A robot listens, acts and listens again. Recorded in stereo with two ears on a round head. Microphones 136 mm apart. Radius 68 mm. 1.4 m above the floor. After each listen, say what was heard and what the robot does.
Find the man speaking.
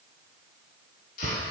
Keep listening.
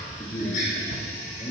The man speaking: about 30° left or 150° left. Turn 30° left.
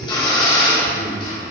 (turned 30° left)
So it is at 115° left. Turn 115° left.
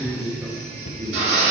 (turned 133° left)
The man speaking is now 25° right. Turn 25° right.
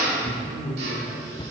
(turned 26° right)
Facing the man speaking, over 4 m away.